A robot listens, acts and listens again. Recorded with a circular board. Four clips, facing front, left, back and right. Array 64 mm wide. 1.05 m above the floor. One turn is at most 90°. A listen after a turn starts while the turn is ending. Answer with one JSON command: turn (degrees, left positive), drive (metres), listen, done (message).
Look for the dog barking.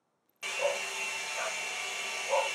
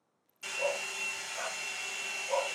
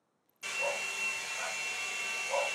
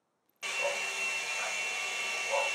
{"done": "Facing the dog barking."}